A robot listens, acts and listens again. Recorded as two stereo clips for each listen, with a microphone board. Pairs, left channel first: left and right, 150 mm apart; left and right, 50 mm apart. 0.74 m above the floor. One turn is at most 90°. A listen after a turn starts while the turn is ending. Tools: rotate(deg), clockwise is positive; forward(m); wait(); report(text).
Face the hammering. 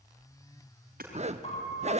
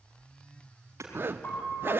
rotate(90)
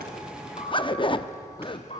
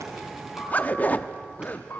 wait()
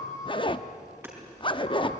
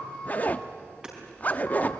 rotate(15)
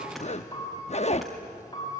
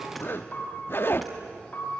wait()
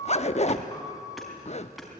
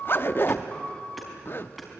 wait()
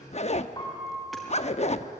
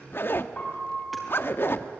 report("Facing where the hammering came from. I can't hear it now.")